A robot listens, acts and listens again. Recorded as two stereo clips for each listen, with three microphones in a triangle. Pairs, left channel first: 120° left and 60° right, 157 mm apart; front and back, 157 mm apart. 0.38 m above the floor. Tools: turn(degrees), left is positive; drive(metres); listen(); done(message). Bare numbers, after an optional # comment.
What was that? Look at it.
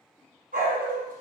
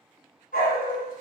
# The dog barking: 30° right.
turn(-30)
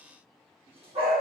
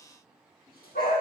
# The dog barking is now 10° right.
turn(-10)
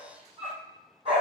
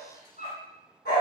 # The dog barking is now 10° right.
turn(-10)
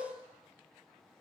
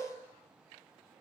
listen()
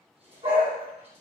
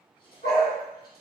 # The dog barking is now 10° right.
turn(-10)
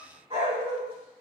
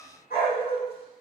# The dog barking is now 10° right.
turn(-10)
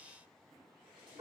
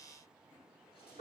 done("Found it: a dog barking, straight ahead.")